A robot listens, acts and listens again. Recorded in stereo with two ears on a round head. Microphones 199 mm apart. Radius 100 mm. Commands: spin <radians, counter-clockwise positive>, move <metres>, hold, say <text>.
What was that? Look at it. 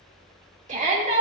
spin -0.52
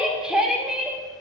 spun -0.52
say Found it: a shout, straight ahead, 2 to 4 m away.